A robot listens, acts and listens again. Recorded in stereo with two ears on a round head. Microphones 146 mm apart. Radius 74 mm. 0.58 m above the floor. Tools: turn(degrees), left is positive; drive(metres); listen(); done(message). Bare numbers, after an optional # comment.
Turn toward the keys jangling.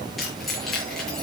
turn(30)
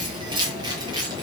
# So it is at 25° right.
turn(-25)
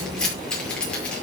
done("Facing the keys jangling.")